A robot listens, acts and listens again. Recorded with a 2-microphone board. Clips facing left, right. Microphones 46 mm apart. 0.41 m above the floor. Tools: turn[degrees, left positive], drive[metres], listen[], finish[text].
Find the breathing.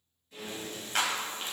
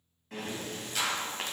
Thought: The breathing: about 65° right or 115° right.
Action: turn[-65]
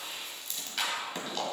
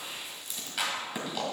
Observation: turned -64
Thought: So it is at 10° right.
Action: turn[-10]
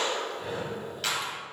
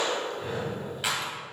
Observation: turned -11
Action: finish[Found it: breathing, straight ahead, 1 to 2 m away.]